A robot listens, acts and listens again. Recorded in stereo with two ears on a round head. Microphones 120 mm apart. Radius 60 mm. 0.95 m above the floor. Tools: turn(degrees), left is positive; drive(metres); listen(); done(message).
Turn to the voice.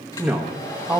turn(degrees=-30)
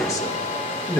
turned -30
turn(degrees=25)
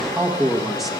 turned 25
done("Found it: a man speaking, straight ahead, 1 to 2 m away.")